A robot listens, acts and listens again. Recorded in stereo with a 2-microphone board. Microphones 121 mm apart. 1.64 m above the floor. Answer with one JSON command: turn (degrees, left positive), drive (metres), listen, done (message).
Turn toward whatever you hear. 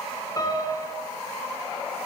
{"turn": 30}
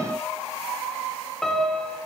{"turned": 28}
{"done": "Facing the piano."}